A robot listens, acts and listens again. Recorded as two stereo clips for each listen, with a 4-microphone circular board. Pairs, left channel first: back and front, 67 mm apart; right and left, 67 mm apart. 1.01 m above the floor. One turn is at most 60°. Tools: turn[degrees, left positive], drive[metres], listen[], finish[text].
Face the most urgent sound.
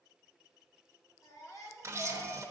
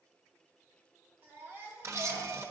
Thought: The baby crying: 145° left.
Action: turn[60]
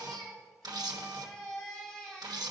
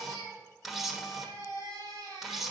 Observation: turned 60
Thought: The baby crying is now 105° left.
Action: turn[60]
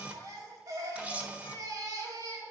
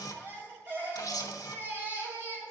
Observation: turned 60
Thought: The baby crying is now 35° left.
Action: turn[35]
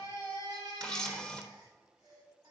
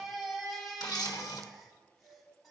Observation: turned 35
Action: finish[Found it: a baby crying, straight ahead.]